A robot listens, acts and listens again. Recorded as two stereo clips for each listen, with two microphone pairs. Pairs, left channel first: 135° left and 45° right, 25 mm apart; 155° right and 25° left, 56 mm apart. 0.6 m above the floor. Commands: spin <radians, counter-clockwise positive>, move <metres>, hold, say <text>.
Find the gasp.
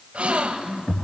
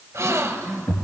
spin -0.17
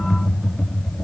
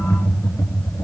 say I heard a gasp from this way, but can't make it out now.